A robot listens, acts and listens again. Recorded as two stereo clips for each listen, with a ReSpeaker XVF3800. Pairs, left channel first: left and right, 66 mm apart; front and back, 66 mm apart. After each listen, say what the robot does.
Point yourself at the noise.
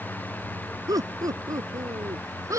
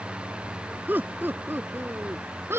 Turn 125° right.
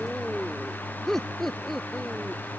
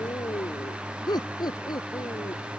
Found it: laughter, straight ahead.